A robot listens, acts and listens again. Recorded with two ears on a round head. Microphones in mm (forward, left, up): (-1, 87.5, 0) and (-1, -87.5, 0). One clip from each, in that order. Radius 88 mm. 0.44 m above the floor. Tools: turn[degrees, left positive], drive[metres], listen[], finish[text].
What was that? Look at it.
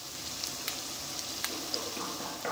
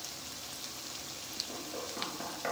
Thought: The knocking: about 15° right or 165° right.
Action: turn[-15]
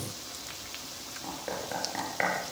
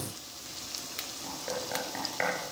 Action: finish[Facing the knocking.]